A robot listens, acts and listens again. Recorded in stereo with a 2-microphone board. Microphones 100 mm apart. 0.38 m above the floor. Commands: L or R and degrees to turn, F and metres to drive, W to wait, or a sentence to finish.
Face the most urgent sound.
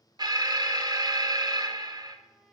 R40
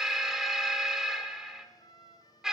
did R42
Found it: an alarm, straight ahead, under 1 m away.